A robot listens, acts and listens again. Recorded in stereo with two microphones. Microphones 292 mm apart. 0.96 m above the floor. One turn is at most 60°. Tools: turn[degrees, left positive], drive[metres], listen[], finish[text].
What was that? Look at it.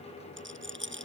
Thought: The rattle: about 40° right or 140° right.
Action: turn[-40]
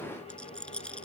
Action: finish[Found it: a rattle, straight ahead.]